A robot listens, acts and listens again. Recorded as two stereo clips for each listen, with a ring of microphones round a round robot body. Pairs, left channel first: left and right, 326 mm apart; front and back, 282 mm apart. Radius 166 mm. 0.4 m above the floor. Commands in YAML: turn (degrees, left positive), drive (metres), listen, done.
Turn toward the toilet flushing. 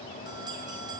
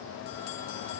listen: true
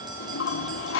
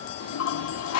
turn: 35
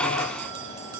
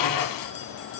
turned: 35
listen: true
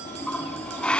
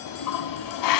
done: "Facing the toilet flushing, 1 to 2 m away."